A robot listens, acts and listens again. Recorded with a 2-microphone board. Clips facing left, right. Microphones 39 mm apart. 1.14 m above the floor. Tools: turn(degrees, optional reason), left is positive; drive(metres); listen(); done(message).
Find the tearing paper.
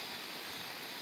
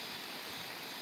listen()
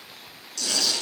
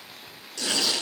turn(degrees=-20, reason="The tearing paper: about 20° right or 160° right.")
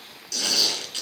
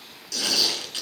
done("Found it: tearing paper, straight ahead.")